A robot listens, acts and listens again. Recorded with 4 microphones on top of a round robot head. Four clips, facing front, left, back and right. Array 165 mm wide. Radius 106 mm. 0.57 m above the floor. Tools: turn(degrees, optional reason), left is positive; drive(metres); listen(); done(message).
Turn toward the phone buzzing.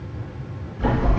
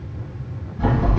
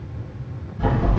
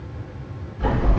turn(degrees=125, reason="The phone buzzing: 125° left.")
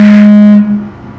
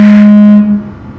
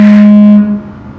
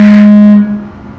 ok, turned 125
turn(degrees=-20, reason="The phone buzzing is now 20° right.")
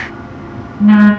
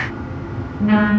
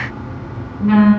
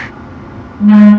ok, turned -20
done("Found it: a phone buzzing, straight ahead.")